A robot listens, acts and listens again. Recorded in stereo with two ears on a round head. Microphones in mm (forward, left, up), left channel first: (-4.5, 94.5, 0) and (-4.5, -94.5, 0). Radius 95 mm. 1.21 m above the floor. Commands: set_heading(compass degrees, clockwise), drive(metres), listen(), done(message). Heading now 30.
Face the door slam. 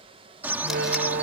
set_heading(85)
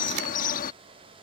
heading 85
listen()
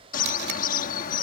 done("I heard a door slam, but can't make it out now. It was about straight ahead or 70° right.")